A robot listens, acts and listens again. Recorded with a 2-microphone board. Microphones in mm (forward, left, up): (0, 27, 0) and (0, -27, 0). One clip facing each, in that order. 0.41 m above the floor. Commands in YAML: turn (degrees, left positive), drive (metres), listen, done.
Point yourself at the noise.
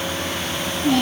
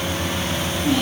turn: 55
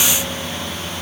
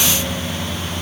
listen: true
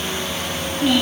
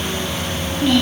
done: "Found it: a child speaking, straight ahead."